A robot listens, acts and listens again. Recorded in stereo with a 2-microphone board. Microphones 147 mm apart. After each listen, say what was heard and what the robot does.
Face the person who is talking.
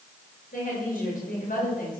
Turn 90° left.
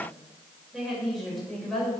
Facing the woman speaking, over 4 m away.